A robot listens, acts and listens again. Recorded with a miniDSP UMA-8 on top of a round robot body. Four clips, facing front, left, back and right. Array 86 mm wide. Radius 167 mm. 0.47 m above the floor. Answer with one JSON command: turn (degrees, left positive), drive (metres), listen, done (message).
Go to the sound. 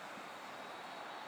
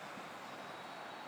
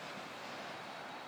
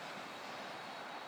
{"listen": true}
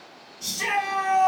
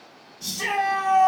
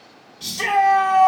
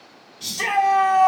{"turn": -145}
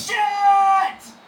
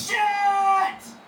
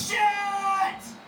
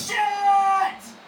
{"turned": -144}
{"drive": 1.0}
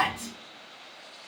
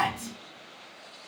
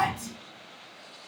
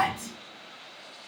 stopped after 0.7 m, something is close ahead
{"done": "I am next to the shout."}